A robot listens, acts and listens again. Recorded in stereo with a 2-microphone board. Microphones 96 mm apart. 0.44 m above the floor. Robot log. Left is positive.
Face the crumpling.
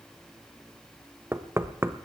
cmd idle
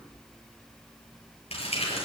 cmd yaw +90
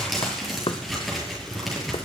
end: Found it: crumpling, straight ahead, over 4 m away.